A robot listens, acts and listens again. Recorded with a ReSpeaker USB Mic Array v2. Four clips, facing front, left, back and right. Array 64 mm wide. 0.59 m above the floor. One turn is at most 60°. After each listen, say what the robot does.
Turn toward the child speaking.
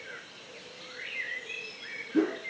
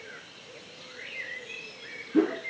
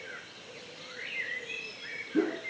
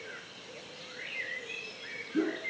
Keep listening.
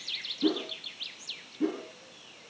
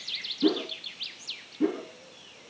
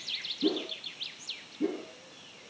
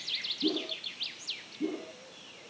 Keep listening.
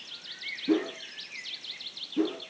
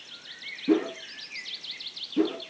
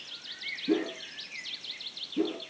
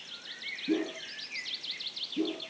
I can't make out a child speaking to turn to.